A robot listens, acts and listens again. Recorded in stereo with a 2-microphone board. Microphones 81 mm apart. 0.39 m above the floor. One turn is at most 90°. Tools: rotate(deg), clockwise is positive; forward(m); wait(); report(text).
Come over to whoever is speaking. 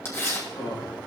rotate(-55)
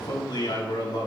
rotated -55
rotate(-65)
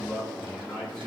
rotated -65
rotate(-10)
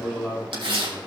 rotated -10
forward(1.0)
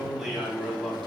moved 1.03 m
forward(1.0)
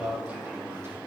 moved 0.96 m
rotate(20)
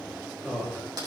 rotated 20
forward(1.0)
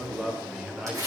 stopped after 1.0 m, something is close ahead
report("Arrived at the man speaking, straight ahead.")